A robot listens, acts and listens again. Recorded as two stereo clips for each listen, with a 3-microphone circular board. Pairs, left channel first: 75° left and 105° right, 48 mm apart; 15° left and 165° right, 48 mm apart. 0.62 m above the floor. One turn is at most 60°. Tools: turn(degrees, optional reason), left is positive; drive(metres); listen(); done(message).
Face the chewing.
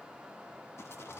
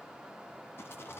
listen()
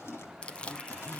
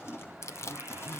turn(degrees=10, reason="The chewing: 10° left.")
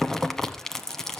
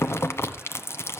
done("Found it: chewing, straight ahead, 1 to 2 m away.")